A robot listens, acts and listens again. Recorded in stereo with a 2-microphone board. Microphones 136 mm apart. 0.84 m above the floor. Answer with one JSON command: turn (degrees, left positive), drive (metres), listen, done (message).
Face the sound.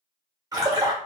{"turn": -30}
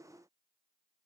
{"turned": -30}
{"listen": true}
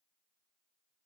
{"done": "I heard a splash, but can't make it out now. It was about straight ahead or 120° right."}